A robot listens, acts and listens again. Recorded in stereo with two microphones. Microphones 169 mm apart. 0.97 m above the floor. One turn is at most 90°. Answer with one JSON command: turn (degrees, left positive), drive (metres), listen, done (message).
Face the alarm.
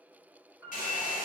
{"listen": true}
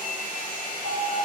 {"turn": 30}
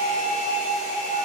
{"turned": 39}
{"turn": -10}
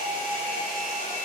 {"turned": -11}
{"done": "Found it: an alarm, straight ahead."}